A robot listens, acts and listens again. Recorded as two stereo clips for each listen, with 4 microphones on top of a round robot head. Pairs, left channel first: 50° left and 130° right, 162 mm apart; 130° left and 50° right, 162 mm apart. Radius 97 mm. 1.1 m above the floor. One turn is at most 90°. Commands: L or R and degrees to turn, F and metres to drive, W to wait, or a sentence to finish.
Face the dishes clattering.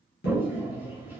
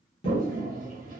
L75
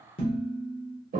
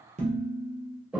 Facing the dishes clattering.